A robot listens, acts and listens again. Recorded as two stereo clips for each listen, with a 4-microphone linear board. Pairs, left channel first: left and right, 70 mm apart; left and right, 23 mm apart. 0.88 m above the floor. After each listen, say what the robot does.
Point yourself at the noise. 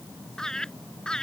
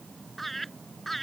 Turn 30° left.
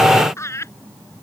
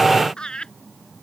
Turn 135° left.
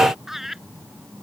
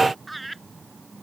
Facing the laughter.